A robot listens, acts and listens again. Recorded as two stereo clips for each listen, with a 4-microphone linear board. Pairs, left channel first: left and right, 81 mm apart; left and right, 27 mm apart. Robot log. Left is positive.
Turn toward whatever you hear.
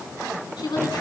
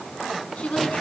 note: The woman speaking: about 70° left or 110° left.
cmd yaw +70
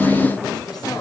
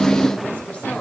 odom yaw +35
cmd idle
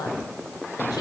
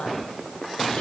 note: So it is at 60° left.
cmd yaw +60
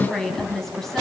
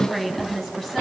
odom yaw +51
end: Facing the woman speaking.